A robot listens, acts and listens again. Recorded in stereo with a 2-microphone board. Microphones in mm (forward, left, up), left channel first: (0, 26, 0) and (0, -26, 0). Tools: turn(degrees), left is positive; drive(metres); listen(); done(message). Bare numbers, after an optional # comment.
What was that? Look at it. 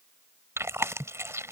# The chewing: about 60° right or 120° right.
turn(-60)
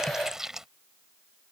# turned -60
# So it is at 10° right.
turn(-10)
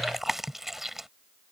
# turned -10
done("Facing the chewing.")